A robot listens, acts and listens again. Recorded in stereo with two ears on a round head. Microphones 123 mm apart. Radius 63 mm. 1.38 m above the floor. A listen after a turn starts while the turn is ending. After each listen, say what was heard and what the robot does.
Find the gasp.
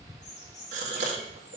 The gasp: about 55° right or 125° right. Turn 55° right.
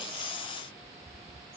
Keep listening.
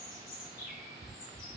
I heard a gasp, but can't make it out now. It was about straight ahead or 70° right.